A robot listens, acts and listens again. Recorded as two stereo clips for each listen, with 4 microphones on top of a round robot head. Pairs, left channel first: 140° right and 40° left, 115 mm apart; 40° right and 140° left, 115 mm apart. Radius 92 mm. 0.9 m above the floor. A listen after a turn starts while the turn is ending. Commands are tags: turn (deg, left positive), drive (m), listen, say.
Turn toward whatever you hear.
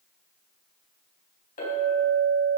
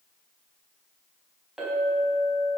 <turn deg="-135"/>
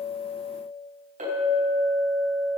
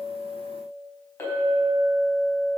<turn deg="30"/>
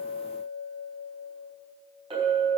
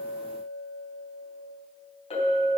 <say>Facing the clink.</say>